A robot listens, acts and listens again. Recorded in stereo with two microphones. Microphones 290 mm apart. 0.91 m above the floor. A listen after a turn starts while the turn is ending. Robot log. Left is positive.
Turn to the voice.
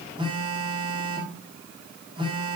cmd idle
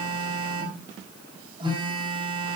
cmd idle
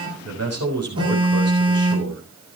note: The man speaking: about 60° right or 120° right.
cmd yaw -60
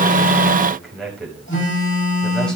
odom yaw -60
end: Facing the man speaking, over 4 m away.